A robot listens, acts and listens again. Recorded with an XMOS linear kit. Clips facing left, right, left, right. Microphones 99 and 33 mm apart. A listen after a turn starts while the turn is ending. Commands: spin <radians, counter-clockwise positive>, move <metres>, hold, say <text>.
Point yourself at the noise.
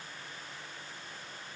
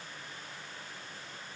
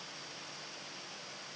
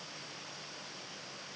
hold
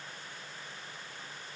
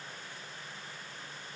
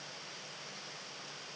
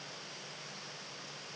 hold
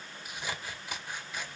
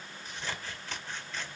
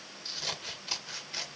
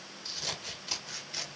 spin 0.52
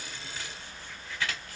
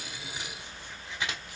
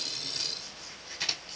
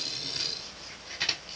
spin -0.35
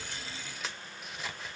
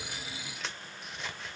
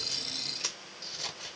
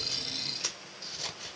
say Facing the scissors, 1 to 2 m away.